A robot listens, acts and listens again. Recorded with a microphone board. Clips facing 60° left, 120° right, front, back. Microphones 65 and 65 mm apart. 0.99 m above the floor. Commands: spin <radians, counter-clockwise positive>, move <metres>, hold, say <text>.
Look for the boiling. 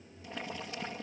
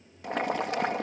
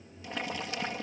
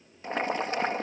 spin -2.27
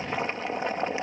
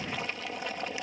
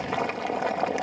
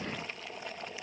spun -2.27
say Facing the boiling.